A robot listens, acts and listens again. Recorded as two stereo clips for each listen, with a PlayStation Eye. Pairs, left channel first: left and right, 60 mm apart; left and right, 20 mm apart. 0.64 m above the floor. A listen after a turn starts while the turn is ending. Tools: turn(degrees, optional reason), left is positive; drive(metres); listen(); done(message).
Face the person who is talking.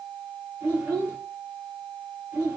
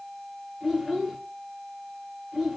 turn(degrees=-30, reason="The child speaking: about 30° right or 150° right.")
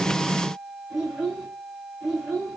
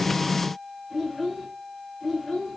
done("Facing the child speaking.")